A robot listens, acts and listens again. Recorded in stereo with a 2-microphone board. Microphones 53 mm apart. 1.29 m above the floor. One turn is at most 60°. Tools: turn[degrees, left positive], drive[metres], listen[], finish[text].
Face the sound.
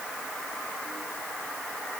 Action: listen[]
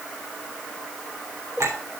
Thought: The clink: about 70° right or 110° right.
Action: turn[-60]
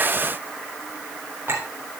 Thought: So it is at 50° right.
Action: turn[-50]
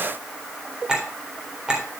Thought: The clink is now 15° right.
Action: turn[-15]
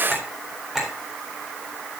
Action: finish[Found it: a clink, straight ahead.]